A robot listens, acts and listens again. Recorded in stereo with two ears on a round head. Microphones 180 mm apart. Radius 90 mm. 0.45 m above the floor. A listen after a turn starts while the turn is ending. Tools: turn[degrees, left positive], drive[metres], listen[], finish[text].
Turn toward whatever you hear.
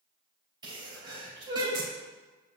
Thought: The sneeze: about 20° right or 160° right.
Action: turn[-20]
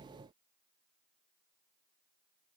Action: listen[]
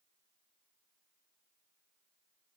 Action: finish[I heard a sneeze, but can't make it out now. It was about straight ahead or 140° right.]